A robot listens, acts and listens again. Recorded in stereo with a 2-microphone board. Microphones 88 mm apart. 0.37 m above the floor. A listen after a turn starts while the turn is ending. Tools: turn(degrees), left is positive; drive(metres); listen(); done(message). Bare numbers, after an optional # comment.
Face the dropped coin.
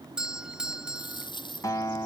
# The dropped coin: about 60° left or 120° left.
turn(60)
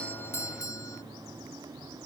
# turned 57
listen()
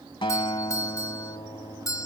done("I heard a dropped coin, but can't make it out now. It was about 5° left or 60° left.")